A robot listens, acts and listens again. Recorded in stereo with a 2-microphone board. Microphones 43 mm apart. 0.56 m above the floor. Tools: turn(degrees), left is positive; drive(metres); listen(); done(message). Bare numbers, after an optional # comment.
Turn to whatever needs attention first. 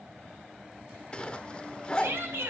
# The shout: about 70° right or 110° right.
turn(-70)
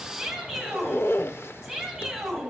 done("Found it: a shout, straight ahead, 2 to 4 m away.")